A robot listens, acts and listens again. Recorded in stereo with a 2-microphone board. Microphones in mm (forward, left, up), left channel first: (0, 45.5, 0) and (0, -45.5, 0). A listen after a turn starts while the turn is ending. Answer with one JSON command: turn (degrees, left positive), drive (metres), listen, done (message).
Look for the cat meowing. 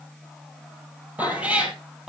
{"turn": -30}
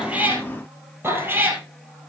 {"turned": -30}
{"turn": -20}
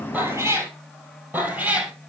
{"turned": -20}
{"turn": -15}
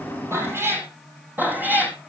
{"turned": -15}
{"turn": -20}
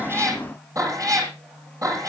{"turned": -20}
{"turn": -140}
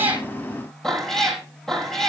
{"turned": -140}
{"done": "Found it: a cat meowing, straight ahead, 2 to 4 m away."}